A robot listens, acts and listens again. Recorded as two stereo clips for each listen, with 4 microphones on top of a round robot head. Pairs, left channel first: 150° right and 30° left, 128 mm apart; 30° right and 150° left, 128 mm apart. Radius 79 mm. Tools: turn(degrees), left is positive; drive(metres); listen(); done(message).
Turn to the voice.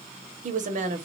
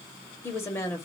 turn(degrees=40)
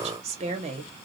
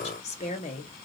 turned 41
done("Found it: a woman speaking, straight ahead.")